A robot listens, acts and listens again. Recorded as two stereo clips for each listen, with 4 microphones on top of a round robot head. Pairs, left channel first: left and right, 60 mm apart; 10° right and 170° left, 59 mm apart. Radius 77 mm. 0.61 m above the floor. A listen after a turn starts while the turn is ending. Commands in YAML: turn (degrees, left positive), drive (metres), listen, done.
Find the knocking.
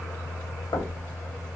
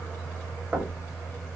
turn: 110
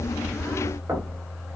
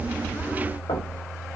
turn: -25
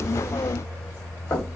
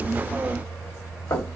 turn: 35
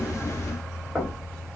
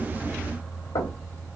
done: "Found it: knocking, straight ahead, 2 to 4 m away."